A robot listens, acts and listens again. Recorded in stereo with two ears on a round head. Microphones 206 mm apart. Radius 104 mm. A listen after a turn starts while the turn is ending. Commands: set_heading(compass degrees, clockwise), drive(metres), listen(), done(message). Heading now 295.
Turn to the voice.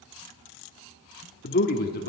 set_heading(255)
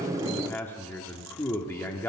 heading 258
set_heading(248)
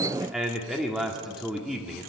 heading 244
done("Facing the man speaking.")